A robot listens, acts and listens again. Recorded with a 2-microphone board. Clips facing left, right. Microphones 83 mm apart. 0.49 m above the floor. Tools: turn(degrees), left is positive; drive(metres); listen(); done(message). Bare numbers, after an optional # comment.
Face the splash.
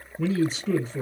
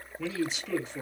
listen()
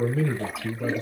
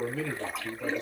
turn(30)
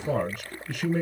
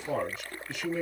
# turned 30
listen()
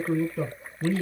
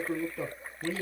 done("I heard a splash, but can't make it out now. It was about 25° right or 145° left.")